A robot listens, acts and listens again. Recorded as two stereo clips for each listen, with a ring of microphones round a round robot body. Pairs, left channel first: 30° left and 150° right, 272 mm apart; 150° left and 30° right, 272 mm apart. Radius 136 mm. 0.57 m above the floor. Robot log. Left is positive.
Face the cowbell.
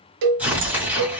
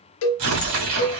note: The cowbell: 170° right.
cmd yaw -170
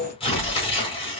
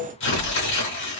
end: Found it: a cowbell, straight ahead.